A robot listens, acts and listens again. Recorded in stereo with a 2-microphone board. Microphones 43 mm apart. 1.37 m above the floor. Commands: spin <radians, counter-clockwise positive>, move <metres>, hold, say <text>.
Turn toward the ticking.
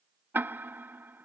spin -0.96
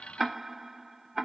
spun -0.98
say Facing the ticking.